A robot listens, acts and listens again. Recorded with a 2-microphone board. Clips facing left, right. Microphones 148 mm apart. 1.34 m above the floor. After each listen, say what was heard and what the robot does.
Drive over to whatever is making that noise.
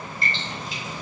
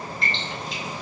Turn 30° left.
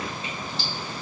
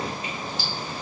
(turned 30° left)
Keep listening.
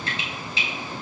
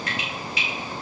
So it is at 150° left. Turn 150° left.
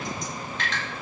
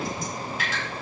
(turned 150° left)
The dripping is now 10° right. Turn 10° right.
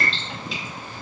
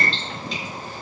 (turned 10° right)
Drive 1.0 m forward.
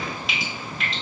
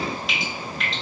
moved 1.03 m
Drive 1.0 m forward.
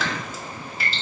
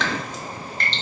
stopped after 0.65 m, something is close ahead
Arrived at the dripping, straight ahead.